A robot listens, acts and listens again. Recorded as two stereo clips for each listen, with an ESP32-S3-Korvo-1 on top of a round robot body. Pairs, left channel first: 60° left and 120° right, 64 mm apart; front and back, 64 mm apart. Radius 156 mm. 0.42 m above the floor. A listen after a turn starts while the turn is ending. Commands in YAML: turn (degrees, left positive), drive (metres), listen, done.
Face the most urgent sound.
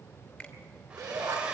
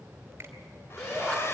turn: -80
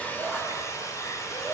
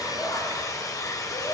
listen: true
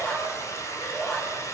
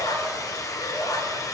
turn: -10
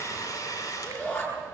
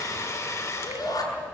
done: "Found it: a shout, straight ahead, over 4 m away."